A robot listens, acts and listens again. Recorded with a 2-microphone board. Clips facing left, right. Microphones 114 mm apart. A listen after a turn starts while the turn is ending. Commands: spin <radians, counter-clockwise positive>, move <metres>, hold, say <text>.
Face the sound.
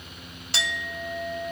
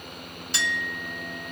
spin 1.22
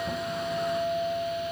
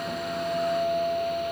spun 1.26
say Found it: a clink, straight ahead.